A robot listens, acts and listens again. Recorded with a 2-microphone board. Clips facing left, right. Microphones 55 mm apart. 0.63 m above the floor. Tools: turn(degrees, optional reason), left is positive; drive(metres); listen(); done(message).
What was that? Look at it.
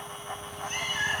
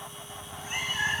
turn(degrees=-30)
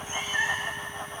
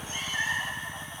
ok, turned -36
turn(degrees=25, reason="So it is at 25° left.")
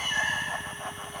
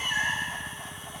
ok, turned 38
turn(degrees=-10, reason="The cat meowing is now 10° right.")
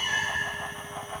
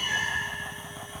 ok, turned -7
done("Found it: a cat meowing, straight ahead, 2 to 4 m away.")